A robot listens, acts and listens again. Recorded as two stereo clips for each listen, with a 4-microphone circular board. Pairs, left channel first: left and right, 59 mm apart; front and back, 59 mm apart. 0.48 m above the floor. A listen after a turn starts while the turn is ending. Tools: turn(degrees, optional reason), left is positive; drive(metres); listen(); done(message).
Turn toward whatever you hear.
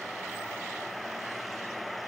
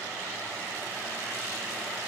listen()
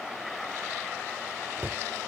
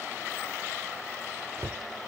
turn(degrees=-140, reason="The cupboard door: 140° right.")
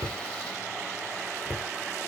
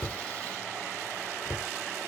turn(degrees=-30, reason="The cupboard door is now 30° right.")
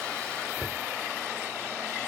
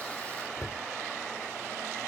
done("Facing the cupboard door.")